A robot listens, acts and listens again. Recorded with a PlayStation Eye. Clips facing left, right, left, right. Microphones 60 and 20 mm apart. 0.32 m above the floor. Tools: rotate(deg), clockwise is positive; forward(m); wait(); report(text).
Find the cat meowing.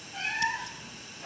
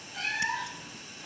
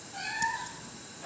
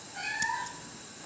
rotate(-25)
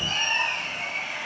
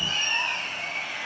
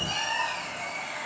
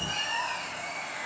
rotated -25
rotate(-130)
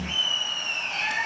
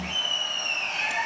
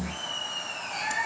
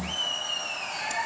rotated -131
rotate(15)
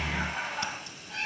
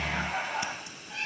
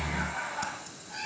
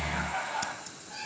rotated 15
report("Found it: a cat meowing, straight ahead.")